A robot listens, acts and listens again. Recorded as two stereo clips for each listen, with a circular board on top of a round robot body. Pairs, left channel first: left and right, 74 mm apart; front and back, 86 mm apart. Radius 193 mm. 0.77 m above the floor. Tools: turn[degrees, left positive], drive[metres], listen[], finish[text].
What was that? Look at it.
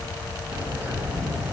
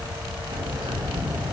Thought: The bird: 160° right.
Action: turn[-160]
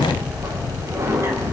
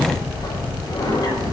Thought: The bird is now 45° right.
Action: turn[-45]
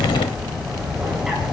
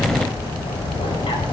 Thought: The bird is now 10° right.
Action: turn[-10]
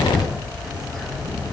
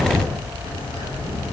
Action: finish[Found it: a bird, straight ahead.]